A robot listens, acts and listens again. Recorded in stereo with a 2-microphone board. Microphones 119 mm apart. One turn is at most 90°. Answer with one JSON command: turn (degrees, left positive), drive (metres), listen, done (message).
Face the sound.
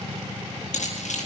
{"turn": 90}
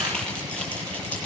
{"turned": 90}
{"turn": 10}
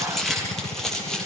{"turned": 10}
{"done": "Found it: keys jangling, straight ahead, over 4 m away."}